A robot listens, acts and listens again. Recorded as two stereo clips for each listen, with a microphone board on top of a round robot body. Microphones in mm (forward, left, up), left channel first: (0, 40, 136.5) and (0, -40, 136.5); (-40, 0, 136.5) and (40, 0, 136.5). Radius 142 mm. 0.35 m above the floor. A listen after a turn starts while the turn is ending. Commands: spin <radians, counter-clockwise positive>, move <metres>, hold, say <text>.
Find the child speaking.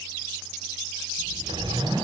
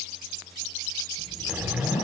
spin 1.83
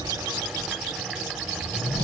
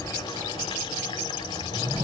spin -0.17
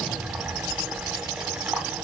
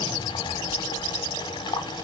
say Facing the child speaking.